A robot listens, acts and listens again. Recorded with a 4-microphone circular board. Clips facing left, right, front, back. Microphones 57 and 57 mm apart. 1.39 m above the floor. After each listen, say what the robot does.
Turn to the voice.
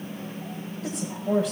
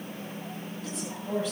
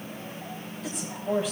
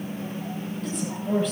Turn 85° left.
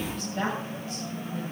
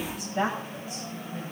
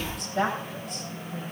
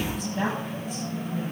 Turn 20° right.
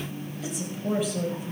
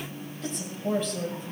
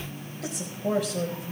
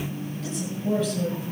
Found it: a woman speaking, straight ahead.